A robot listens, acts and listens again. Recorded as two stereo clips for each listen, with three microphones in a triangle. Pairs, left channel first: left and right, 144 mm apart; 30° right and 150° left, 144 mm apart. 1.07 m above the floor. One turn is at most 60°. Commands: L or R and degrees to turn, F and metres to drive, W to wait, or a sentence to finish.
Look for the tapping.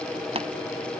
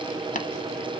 R45
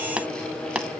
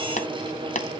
Found it: tapping, straight ahead.